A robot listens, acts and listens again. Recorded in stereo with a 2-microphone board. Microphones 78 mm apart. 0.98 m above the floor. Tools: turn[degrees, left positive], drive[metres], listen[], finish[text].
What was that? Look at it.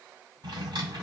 Action: turn[-90]
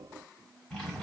Action: finish[Facing the drawer, 1 to 2 m away.]